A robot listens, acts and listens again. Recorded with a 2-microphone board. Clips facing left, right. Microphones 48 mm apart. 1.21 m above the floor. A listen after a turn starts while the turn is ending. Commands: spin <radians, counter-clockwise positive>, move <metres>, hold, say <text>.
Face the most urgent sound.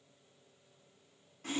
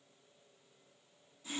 hold
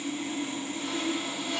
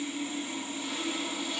hold
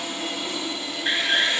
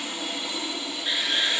spin 0.70
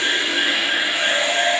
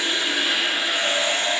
hold
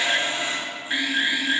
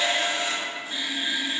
spin 1.57
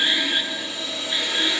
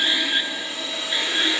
hold
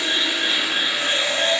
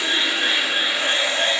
hold
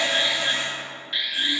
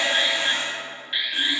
spin -0.26
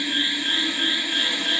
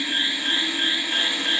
say Found it: an alarm, straight ahead.